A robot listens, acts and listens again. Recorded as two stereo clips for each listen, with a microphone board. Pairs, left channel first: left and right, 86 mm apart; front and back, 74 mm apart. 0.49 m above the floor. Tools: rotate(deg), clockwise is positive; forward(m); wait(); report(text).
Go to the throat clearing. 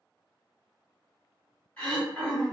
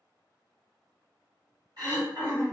rotate(-165)
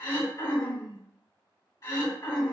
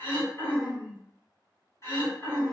rotate(-45)
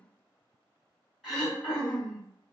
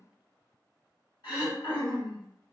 forward(1.0)
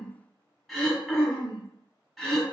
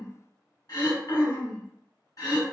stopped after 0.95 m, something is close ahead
report("I am next to the throat clearing.")